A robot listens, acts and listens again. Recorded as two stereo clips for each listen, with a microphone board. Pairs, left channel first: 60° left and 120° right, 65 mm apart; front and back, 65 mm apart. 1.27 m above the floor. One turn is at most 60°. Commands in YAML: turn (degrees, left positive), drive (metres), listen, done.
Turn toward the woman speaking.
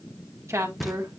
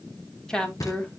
turn: -60
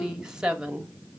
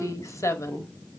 turn: -45
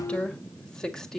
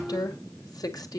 turn: -20
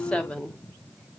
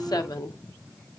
turn: -15
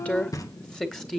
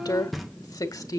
turn: -25
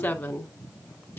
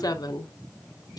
done: "Facing the woman speaking."